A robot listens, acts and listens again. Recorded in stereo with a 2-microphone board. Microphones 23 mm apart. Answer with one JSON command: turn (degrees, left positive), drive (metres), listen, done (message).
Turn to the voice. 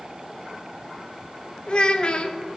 {"turn": 45}
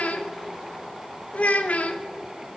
{"turn": 90}
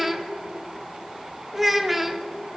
{"turn": -10}
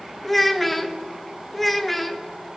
{"done": "Facing the child speaking."}